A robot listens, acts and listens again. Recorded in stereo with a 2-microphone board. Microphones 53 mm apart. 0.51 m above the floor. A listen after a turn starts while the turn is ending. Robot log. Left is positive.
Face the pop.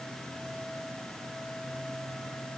cmd idle
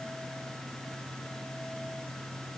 cmd idle
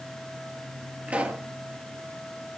note: The pop: about 25° right or 155° right.
cmd yaw -25
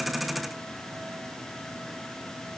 cmd idle
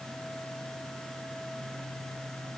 end: I heard a pop, but can't make it out now. It was about straight ahead or 130° right.